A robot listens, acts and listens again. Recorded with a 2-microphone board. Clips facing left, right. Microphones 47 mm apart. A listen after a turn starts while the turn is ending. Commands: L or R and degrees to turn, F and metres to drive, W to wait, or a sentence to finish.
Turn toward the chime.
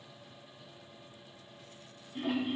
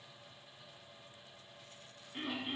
W
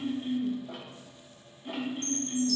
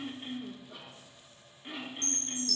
R90
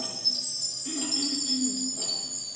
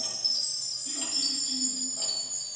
R15
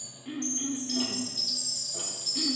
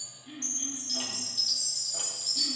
Facing the chime.